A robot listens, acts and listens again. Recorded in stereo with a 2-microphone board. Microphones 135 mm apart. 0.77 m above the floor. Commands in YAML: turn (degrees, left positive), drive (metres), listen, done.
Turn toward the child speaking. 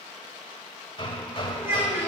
turn: -20
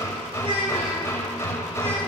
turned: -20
turn: -135
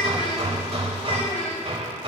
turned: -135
turn: 50
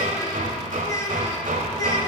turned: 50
turn: 25
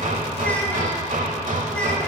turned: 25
listen: true
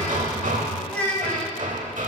turn: 10
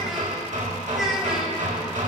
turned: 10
done: "Facing the child speaking, 2 to 4 m away."